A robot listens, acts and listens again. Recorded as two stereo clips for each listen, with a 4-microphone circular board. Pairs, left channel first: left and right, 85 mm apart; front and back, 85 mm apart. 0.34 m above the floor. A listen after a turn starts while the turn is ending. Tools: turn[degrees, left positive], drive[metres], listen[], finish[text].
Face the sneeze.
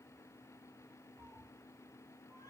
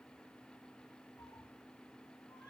Action: listen[]
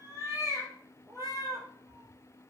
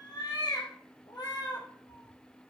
Action: listen[]
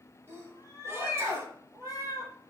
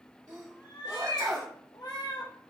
Thought: The sneeze: 140° right.
Action: turn[-140]
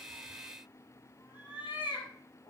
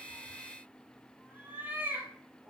Action: finish[I heard a sneeze from this way, but can't make it out now.]